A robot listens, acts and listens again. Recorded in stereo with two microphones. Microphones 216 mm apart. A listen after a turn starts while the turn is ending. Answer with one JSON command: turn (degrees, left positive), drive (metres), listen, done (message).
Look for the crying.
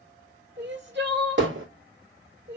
{"turn": -55}
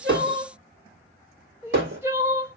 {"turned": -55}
{"turn": -15}
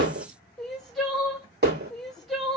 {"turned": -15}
{"done": "Facing the crying."}